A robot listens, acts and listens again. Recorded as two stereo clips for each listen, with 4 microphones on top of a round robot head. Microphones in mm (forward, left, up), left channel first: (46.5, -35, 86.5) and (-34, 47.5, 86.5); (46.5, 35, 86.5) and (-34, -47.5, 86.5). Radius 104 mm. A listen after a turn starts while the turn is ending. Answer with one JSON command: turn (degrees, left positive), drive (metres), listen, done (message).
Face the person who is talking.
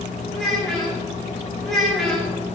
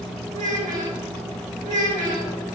{"turn": -135}
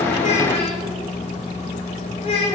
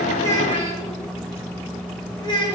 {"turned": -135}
{"done": "Facing the child speaking, over 4 m away."}